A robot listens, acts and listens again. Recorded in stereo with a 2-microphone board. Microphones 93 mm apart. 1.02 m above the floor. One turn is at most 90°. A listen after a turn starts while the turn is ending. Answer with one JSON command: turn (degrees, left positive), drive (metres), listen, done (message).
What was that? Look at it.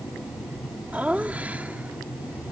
{"turn": -15}
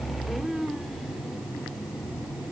{"turn": -30}
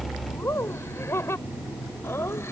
{"turn": 25}
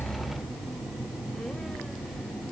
{"listen": true}
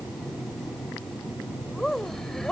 {"done": "Found it: laughter, straight ahead."}